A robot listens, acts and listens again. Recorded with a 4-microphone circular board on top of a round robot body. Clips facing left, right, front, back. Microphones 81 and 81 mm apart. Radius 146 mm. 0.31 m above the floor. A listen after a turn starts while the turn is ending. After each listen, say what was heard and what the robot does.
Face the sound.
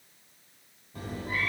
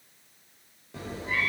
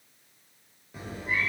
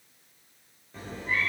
The cat meowing: 85° right. Turn 85° right.
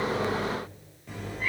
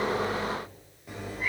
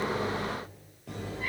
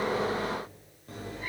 The cat meowing is now 10° right. Turn 10° right.
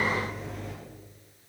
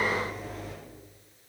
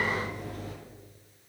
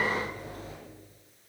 Facing the cat meowing.